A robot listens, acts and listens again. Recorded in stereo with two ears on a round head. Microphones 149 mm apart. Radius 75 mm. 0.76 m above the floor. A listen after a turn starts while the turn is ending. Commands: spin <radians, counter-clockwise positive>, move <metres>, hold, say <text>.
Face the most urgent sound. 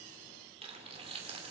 hold
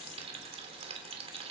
hold
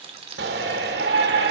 spin -1.22
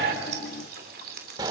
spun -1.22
spin -0.44
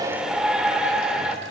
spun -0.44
say Found it: a shout, straight ahead.